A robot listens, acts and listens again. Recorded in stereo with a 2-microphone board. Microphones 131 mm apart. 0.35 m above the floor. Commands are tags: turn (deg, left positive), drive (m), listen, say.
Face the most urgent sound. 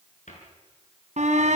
<turn deg="-65"/>
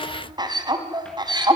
<turn deg="-35"/>
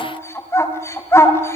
<turn deg="20"/>
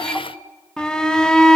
<say>Facing the shout, 2 to 4 m away.</say>